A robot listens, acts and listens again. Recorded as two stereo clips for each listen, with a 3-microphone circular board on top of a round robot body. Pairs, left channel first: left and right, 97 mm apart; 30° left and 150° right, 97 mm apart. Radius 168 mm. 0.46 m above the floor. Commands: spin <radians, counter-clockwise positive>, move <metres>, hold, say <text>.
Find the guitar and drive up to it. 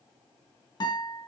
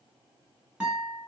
spin 2.27
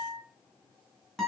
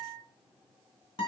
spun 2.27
move 1.0
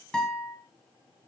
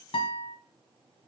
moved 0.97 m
move 1.0
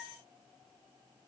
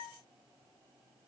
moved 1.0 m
hold
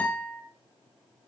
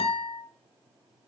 spin 0.26
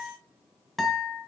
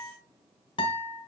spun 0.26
move 1.0
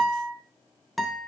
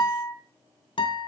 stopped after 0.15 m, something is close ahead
say I am next to the guitar.